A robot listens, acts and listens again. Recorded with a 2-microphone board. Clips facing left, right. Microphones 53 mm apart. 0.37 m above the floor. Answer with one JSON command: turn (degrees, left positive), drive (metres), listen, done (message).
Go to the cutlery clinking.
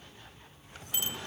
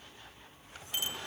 {"listen": true}
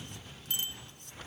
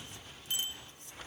{"listen": true}
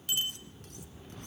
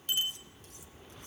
{"done": "I can't make out cutlery clinking to turn to."}